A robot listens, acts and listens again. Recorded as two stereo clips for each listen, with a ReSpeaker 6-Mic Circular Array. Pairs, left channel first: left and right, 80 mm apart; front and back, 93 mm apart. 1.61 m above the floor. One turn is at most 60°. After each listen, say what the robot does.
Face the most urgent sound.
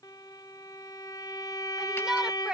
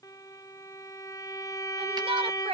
Turn 60° right.
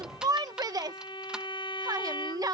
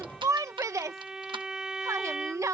Turn 60° right.
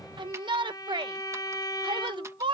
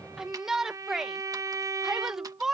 Turn 60° right.
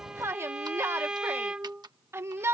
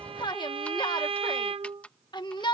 Turn 35° right.
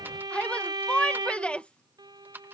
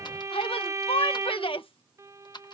Turn 15° left.
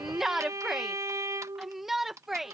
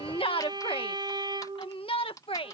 Found it: a shout, straight ahead.